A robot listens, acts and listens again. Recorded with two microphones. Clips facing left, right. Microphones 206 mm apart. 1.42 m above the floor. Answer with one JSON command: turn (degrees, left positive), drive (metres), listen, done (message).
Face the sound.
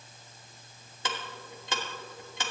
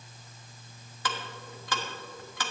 {"turn": 25}
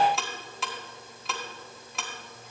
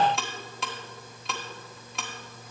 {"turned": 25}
{"done": "Found it: ticking, straight ahead."}